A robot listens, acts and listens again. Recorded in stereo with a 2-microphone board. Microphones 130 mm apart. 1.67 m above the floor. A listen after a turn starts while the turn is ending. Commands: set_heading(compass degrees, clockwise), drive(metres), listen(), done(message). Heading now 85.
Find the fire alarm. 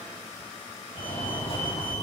set_heading(35)
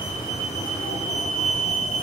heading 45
set_heading(315)
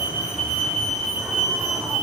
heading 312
done("Facing the fire alarm.")